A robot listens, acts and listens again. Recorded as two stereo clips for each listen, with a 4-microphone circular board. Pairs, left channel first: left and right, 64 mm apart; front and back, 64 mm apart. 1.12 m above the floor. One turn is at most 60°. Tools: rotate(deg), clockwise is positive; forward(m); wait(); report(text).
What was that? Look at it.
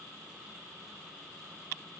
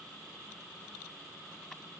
wait()
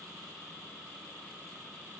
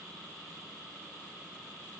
wait()
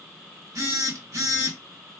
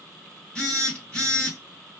rotate(60)
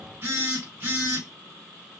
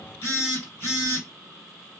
rotate(40)
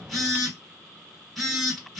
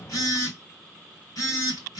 report("Facing the phone buzzing, 1 to 2 m away.")